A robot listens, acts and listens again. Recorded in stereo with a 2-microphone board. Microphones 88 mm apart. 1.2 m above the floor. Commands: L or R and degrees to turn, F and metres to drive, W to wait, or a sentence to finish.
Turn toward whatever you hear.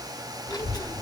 L45
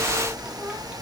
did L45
R15
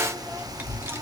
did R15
R30
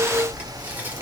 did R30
R25
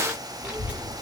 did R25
R15
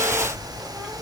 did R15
Found it: a child speaking, straight ahead.